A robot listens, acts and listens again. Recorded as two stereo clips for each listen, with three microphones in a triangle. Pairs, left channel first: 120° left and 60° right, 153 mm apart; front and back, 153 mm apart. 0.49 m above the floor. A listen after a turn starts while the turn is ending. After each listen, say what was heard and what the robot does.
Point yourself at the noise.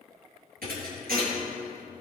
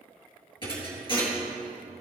The thud: 55° right. Turn 55° right.
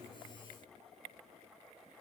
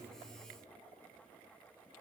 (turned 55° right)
Facing where the thud came from. I can't hear it now.